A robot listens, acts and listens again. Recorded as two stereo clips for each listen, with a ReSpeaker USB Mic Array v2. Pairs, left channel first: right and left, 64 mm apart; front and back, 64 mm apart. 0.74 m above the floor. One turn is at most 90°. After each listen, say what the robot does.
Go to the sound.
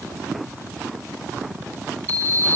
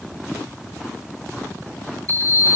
Turn 65° left.
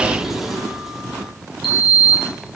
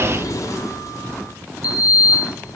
Drive 1.0 m forward.
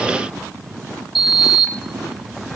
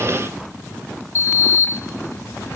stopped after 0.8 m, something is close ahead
Arrived at the sliding door, straight ahead.